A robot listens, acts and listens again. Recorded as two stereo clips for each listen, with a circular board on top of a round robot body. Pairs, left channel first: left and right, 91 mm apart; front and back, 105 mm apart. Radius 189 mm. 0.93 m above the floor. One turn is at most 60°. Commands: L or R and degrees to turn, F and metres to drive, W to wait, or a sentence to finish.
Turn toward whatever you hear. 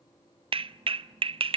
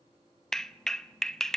R60
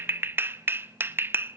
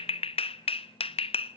R25
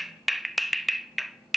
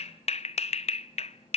Found it: a clap, straight ahead.